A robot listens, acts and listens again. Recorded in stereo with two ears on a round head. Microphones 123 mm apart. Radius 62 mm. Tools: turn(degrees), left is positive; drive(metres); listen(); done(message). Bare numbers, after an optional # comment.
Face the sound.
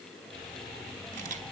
# The camera shutter: about 60° right or 120° right.
turn(-60)
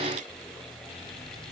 listen()
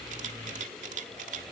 # So it is at 55° right.
turn(-55)
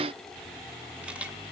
# The camera shutter is now 10° right.
turn(-10)
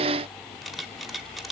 done("Found it: a camera shutter, straight ahead, 1 to 2 m away.")